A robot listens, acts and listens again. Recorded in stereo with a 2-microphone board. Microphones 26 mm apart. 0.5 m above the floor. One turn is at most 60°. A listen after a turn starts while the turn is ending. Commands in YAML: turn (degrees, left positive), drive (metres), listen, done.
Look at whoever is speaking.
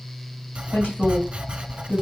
turn: 60
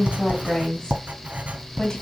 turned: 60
turn: 25
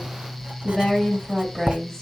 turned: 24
done: "Found it: a woman speaking, straight ahead, 2 to 4 m away."